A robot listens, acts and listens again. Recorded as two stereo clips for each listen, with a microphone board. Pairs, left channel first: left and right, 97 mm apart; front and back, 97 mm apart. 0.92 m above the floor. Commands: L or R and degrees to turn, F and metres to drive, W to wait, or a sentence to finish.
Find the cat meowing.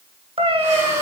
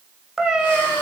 R95
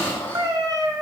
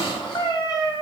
R40
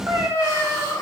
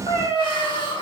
R25
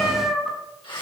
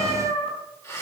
Facing the cat meowing.